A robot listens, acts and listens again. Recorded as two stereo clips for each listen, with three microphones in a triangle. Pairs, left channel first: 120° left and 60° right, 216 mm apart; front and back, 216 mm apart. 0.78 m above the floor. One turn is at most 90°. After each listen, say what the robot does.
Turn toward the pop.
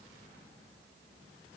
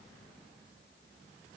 Keep listening.
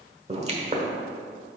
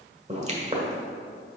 Turn 90° right.
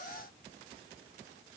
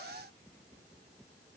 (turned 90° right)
Turn 30° right.
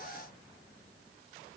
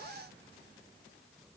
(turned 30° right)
I heard a pop from this way, but can't make it out now.